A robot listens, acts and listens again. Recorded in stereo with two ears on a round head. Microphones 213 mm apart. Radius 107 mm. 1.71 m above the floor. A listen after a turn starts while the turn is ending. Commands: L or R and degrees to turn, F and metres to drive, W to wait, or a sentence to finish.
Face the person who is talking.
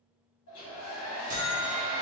W
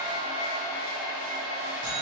W
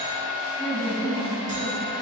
L35
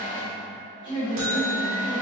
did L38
Found it: a woman speaking, straight ahead.